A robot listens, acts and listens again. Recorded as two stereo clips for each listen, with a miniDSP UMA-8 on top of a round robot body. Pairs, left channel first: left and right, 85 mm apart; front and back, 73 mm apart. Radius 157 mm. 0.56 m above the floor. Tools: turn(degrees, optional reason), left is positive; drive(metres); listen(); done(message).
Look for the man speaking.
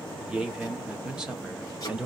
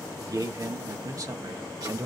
turn(degrees=-165, reason="The man speaking: 165° right.")
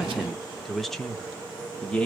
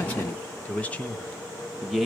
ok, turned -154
turn(degrees=110, reason="The man speaking is now 110° left.")
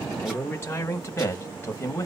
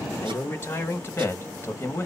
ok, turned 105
turn(degrees=45, reason="The man speaking is now 45° left.")
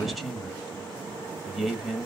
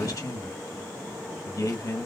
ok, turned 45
done("Facing the man speaking.")